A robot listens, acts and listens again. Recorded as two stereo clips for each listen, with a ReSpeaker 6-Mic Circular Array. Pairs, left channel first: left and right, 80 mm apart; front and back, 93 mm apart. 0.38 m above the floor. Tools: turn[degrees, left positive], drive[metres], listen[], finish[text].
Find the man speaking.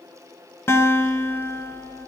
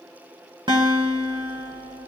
Action: listen[]
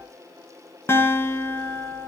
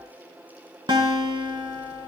Action: listen[]
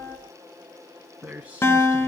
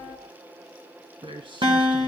Thought: The man speaking: 160° right.
Action: turn[-160]
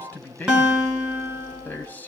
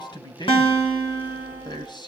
Thought: The man speaking is now 25° left.
Action: turn[25]
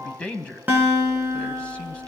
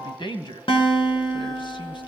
Thought: The man speaking is now 15° left.
Action: turn[15]
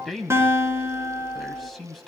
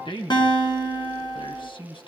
Action: finish[Found it: a man speaking, straight ahead, 2 to 4 m away.]